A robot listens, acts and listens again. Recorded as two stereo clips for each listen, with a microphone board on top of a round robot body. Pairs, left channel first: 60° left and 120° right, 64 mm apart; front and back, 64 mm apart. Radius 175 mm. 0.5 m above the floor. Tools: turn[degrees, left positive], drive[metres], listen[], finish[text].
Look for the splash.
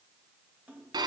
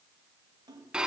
Thought: The splash: 170° left.
Action: turn[170]
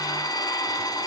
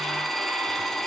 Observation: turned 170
Action: finish[Facing where the splash came from. I can't hear it now.]